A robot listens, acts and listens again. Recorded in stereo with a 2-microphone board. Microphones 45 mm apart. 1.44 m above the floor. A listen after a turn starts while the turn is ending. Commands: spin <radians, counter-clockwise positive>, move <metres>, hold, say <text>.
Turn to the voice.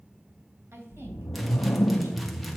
spin -1.57
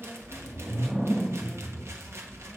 hold
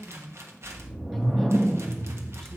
spin -0.17
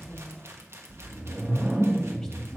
say Facing the woman speaking.